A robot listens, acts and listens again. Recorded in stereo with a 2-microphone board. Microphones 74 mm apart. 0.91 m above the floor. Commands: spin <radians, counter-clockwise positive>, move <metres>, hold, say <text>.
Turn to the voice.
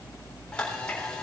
hold
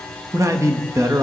spin -0.79
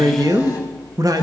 spin -1.31
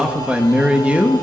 spin -0.35
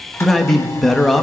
say Facing the man speaking, 1 to 2 m away.